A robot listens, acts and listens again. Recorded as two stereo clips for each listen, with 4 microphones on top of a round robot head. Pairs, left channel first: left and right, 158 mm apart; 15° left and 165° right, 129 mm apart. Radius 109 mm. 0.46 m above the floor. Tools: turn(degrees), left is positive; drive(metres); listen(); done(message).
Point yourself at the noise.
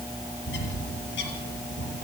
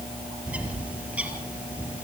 turn(degrees=115)
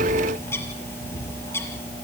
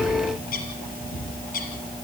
turn(degrees=15)
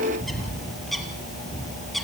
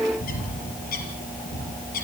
done("Facing the bird.")